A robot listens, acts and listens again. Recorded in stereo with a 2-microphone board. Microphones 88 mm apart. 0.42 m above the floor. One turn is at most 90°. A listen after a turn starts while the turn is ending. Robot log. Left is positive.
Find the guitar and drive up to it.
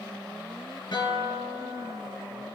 note: The guitar: about 60° left or 120° left.
cmd yaw +60
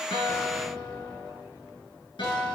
note: So it is at 65° left.
cmd yaw +65
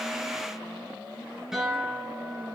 cmd fwd 1.0
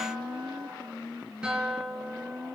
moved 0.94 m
note: The guitar is now 10° right.
cmd yaw -10
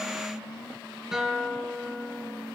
cmd fwd 1.0
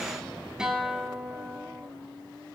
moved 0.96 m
note: The guitar is now 10° right.
cmd yaw -10
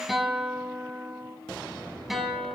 cmd fwd 1.0
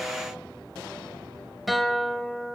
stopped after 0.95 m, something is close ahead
end: I am next to the guitar.